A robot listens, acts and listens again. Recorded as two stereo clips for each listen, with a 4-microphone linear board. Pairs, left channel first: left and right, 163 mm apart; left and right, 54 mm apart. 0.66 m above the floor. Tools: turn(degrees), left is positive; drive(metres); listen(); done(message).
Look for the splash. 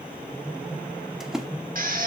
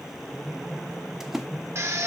turn(degrees=-30)
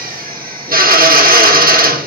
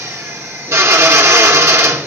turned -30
listen()
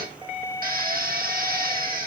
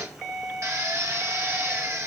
done("I heard a splash, but can't make it out now. It was about 25° left or 145° right.")